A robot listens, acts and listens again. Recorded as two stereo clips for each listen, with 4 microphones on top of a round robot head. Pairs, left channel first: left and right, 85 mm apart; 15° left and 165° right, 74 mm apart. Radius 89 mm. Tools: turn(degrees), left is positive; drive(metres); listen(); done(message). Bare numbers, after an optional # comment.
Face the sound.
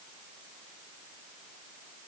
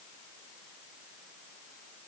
listen()
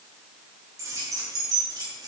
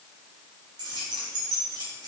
# The keys jangling: 140° right.
turn(-140)
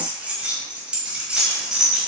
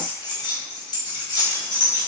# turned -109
done("Facing the keys jangling.")